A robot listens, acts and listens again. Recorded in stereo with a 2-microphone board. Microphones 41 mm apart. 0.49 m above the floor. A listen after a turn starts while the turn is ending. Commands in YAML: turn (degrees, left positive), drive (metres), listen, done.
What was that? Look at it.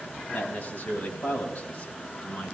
turn: 45
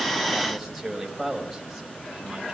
done: "Found it: a man speaking, straight ahead, 2 to 4 m away."